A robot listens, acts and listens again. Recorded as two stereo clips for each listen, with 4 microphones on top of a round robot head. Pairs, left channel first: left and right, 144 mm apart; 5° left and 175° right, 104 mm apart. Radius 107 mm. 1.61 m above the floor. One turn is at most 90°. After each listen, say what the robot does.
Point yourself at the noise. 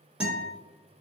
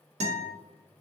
Turn 90° right.
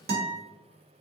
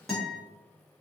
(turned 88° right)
Turn 85° right.
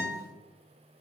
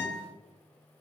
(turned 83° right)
Facing the guitar.